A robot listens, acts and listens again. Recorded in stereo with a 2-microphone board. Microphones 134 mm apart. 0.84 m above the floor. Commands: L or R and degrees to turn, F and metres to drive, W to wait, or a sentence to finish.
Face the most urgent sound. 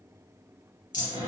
W
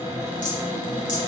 W
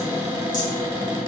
I can't make out anything urgent to turn to.